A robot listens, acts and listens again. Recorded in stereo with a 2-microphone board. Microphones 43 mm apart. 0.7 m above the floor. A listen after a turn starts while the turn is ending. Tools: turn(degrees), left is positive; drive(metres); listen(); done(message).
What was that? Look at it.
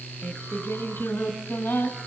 turn(degrees=75)
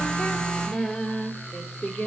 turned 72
turn(degrees=45)
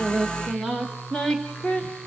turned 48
turn(degrees=25)
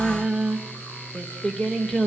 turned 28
turn(degrees=15)
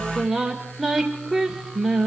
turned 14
done("Facing the singing.")